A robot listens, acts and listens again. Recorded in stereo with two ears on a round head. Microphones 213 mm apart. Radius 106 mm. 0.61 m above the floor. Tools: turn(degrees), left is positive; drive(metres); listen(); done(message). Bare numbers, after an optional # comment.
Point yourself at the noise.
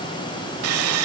# The sawing: about 70° right or 110° right.
turn(-70)
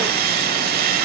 # So it is at 40° right.
turn(-40)
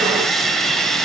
done("Found it: sawing, straight ahead.")